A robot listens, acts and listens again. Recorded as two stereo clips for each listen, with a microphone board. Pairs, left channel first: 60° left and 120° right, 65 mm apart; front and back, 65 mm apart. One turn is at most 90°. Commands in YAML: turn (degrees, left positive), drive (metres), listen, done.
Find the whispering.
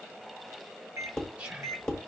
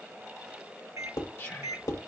turn: -55
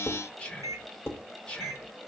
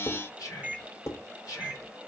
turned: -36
turn: -20
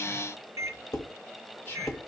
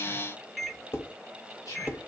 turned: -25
done: "Found it: whispering, straight ahead, 2 to 4 m away."